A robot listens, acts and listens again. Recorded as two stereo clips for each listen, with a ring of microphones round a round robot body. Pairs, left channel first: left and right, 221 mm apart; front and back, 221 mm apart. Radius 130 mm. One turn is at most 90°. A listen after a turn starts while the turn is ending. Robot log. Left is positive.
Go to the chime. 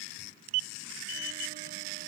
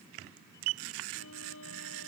cmd idle
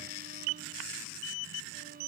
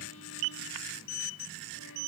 cmd idle
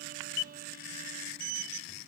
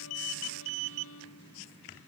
end: I can't make out a chime to turn to.